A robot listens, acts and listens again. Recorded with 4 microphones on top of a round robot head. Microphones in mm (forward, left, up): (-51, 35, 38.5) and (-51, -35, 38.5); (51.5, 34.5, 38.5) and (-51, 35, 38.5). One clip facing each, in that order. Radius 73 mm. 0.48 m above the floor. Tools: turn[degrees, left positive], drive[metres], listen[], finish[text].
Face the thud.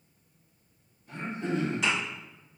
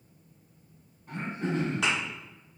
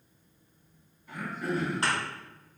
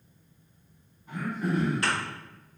Thought: The thud: 65° right.
Action: turn[-65]
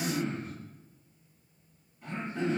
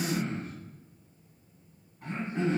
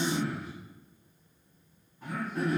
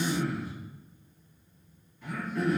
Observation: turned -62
Action: finish[I heard a thud from this way, but can't make it out now.]